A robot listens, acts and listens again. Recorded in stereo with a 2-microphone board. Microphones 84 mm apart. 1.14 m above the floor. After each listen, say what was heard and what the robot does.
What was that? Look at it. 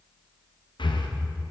The breathing: about 65° left or 115° left. Turn 65° left.
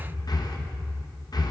So it is at 50° left. Turn 50° left.
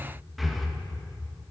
Found it: breathing, straight ahead, under 1 m away.